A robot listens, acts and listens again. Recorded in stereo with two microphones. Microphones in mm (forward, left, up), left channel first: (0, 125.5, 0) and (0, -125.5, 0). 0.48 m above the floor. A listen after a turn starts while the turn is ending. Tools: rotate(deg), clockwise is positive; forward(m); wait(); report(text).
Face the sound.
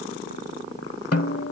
rotate(-70)
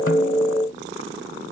wait()
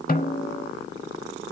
rotate(-35)
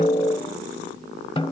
rotate(-20)
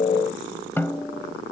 rotate(-10)
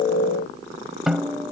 report("Found it: a snare drum, straight ahead.")